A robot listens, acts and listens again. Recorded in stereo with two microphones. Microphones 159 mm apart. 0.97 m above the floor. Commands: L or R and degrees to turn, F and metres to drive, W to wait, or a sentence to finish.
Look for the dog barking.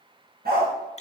R75
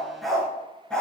Facing the dog barking.